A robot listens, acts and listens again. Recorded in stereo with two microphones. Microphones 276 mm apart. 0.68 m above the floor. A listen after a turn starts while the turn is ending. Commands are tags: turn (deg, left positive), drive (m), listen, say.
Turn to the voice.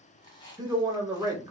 <turn deg="-30"/>
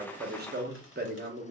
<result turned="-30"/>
<turn deg="-135"/>
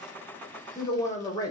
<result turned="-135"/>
<turn deg="15"/>
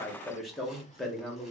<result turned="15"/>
<say>Found it: a man speaking, straight ahead, under 1 m away.</say>